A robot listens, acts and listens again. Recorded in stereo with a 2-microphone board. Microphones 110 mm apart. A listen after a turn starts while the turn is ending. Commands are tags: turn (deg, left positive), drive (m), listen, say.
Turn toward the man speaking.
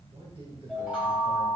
<turn deg="-55"/>
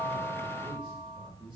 <turn deg="-55"/>
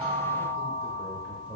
<turn deg="-15"/>
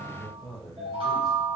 <say>Facing the man speaking, 1 to 2 m away.</say>